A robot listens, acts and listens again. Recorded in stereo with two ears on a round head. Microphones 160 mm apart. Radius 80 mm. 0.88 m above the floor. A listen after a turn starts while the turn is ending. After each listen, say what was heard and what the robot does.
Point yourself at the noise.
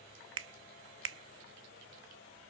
Turn 90° right.
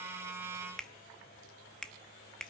Found it: a finger snap, straight ahead.